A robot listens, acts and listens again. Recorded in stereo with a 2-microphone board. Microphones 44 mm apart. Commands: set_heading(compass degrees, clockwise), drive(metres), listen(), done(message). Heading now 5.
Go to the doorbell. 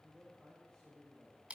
listen()
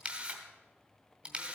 listen()
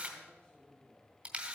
done("I can't make out a doorbell to turn to.")